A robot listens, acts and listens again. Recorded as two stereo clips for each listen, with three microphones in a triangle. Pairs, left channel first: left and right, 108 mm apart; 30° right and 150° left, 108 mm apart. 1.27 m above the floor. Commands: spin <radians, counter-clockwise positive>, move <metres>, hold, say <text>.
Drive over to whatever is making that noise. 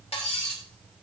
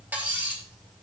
spin 1.31
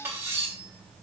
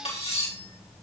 spin -0.35
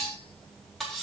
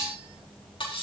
move 1.0
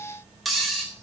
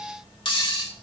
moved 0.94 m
move 1.0
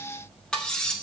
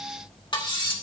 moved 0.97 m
spin 0.17
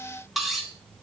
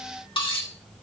move 1.0
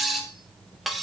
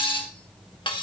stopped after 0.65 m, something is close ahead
say I am next to the cutlery clinking.